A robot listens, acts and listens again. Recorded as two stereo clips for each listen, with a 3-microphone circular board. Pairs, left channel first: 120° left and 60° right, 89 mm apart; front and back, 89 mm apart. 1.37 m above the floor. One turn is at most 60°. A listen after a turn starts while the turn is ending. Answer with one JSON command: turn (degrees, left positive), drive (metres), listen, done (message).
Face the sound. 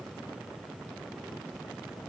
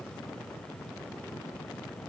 {"listen": true}
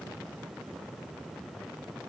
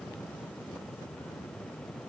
{"listen": true}
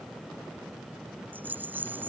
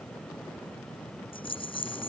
{"turn": 10}
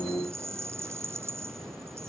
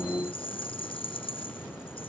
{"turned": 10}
{"done": "Facing the rattle."}